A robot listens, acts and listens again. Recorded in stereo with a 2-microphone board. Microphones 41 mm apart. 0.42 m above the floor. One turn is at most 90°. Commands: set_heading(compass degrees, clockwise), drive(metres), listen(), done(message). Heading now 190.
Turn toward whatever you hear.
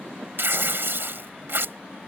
set_heading(260)
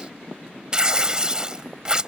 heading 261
set_heading(281)
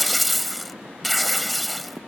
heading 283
done("Found it: tearing paper, straight ahead.")